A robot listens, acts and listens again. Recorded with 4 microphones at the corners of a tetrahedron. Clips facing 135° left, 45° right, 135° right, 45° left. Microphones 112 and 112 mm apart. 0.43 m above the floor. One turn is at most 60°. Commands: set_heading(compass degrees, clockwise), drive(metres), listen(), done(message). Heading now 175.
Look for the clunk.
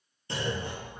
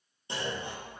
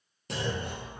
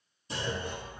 set_heading(235)
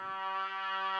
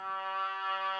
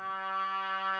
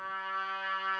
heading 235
set_heading(290)
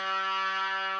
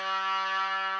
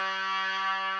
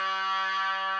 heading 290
done("I heard a clunk from this way, but can't make it out now.")